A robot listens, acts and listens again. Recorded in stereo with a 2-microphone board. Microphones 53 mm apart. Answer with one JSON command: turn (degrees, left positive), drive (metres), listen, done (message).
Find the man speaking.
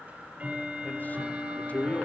{"turn": 30}
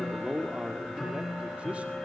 {"turn": -15}
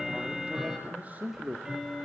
{"turn": -40}
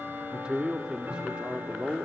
{"turn": -15}
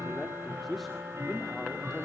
{"done": "Facing the man speaking, 2 to 4 m away."}